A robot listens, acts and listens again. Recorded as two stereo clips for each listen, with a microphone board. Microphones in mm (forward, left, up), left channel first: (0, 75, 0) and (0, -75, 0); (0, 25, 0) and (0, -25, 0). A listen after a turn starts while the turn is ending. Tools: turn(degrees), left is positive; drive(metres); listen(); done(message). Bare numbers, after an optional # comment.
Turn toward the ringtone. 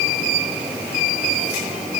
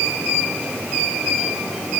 listen()
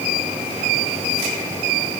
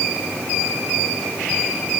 listen()
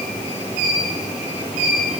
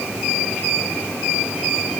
done("I can't make out a ringtone to turn to.")